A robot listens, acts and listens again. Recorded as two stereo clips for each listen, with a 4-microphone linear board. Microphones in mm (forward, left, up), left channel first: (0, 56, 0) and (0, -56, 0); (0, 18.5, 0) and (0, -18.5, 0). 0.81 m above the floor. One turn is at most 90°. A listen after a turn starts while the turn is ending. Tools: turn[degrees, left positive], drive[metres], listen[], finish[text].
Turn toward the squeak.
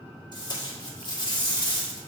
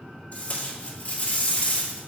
Action: listen[]
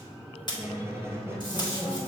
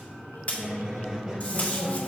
Thought: The squeak: about 20° right or 160° right.
Action: turn[-20]
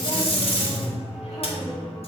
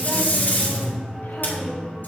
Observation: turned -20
Action: finish[Found it: a squeak, straight ahead, 1 to 2 m away.]